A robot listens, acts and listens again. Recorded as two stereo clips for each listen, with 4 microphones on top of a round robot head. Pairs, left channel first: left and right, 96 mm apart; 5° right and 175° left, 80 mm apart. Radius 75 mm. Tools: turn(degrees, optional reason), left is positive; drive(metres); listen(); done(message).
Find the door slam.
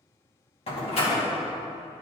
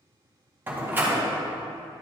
turn(degrees=110, reason="The door slam: 110° left.")
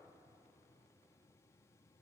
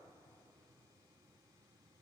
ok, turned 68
turn(degrees=40, reason="Nothing new. It was at 40° left.")
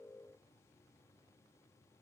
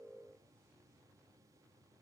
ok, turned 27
turn(degrees=15, reason="Nothing new. It was at 15° left.")
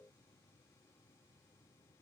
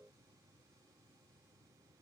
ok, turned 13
done("I heard a door slam from this way, but can't make it out now.")